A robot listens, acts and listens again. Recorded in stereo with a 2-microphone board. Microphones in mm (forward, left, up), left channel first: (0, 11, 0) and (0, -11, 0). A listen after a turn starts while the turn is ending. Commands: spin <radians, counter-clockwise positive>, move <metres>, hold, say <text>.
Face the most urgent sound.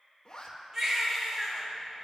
spin -0.44
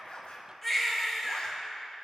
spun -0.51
say Found it: a baby crying, straight ahead.